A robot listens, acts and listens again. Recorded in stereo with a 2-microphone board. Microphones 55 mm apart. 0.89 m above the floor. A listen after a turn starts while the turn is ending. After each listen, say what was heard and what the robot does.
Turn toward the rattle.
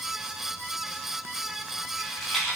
Turn 30° left.
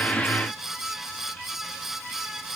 Keep listening.
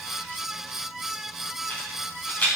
So it is at 150° left. Turn 150° left.
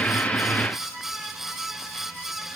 Keep listening.
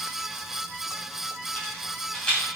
The rattle is now 15° left. Turn 15° left.
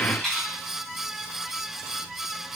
Facing the rattle.